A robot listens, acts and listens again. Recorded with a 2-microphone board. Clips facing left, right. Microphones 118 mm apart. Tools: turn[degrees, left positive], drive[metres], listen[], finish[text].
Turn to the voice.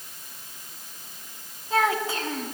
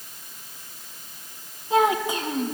Thought: The child speaking: about 15° right or 165° right.
Action: turn[-15]
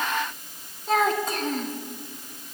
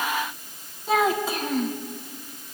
Action: finish[Found it: a child speaking, straight ahead.]